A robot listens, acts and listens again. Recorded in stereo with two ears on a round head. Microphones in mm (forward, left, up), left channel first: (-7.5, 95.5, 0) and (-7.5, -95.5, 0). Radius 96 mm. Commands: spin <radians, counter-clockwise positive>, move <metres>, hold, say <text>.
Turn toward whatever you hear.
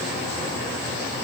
hold
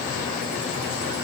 hold
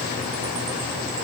say I can't make out anything.